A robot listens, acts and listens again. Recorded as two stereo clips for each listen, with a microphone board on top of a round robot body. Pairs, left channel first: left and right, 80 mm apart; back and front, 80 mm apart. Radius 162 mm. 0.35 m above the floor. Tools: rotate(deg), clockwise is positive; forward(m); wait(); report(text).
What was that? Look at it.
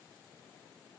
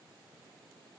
wait()
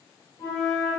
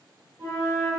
rotate(-50)
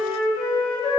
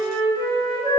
report("Found it: a flute, straight ahead.")